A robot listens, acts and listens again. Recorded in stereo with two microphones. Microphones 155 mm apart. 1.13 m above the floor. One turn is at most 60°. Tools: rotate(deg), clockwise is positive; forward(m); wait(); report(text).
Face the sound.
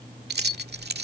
rotate(60)
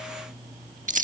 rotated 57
rotate(55)
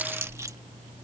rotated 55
rotate(20)
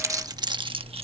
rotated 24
rotate(35)
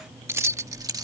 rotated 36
rotate(20)
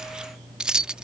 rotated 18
report("Facing the keys jangling.")